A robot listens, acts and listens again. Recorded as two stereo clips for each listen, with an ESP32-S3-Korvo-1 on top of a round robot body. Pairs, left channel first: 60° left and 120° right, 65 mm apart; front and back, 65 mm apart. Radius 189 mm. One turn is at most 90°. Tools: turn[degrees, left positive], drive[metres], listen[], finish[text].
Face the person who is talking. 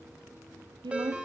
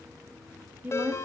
Thought: The woman speaking: 115° right.
Action: turn[-90]
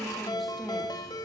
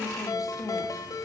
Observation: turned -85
Thought: The woman speaking is now 30° right.
Action: turn[-30]
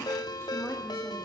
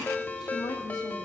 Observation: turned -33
Action: finish[Facing the woman speaking.]